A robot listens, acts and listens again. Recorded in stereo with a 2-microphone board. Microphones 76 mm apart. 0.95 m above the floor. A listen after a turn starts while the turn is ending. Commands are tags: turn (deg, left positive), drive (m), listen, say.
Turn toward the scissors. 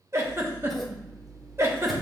<turn deg="30"/>
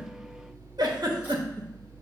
<turn deg="-25"/>
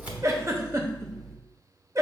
<say>Found it: scissors, straight ahead, 1 to 2 m away.</say>